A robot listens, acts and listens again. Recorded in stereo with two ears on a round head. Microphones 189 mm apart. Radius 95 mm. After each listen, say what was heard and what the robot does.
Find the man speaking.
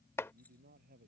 The man speaking: about 45° right or 135° right. Turn 45° right.
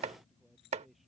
Facing the man speaking.